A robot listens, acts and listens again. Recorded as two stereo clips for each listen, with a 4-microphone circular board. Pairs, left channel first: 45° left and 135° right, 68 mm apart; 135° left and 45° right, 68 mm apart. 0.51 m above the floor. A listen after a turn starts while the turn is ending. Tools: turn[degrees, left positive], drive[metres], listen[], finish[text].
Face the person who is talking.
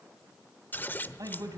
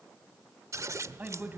Thought: The man speaking: 110° right.
Action: turn[-110]
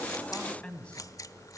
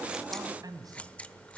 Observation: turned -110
Thought: The man speaking is now 30° right.
Action: turn[-30]
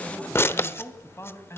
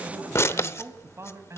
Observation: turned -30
Action: finish[Facing the man speaking.]